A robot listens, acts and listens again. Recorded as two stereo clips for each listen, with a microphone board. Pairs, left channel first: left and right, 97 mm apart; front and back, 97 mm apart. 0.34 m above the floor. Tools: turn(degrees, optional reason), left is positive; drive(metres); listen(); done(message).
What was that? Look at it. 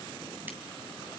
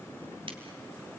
listen()
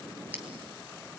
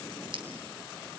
listen()
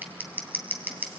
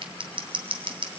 turn(degrees=-160, reason="The scissors: 160° right.")
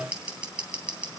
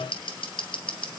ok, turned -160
turn(degrees=-15, reason="The scissors is now 15° right.")
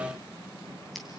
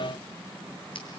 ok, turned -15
listen()
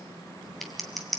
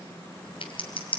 done("Found it: scissors, straight ahead.")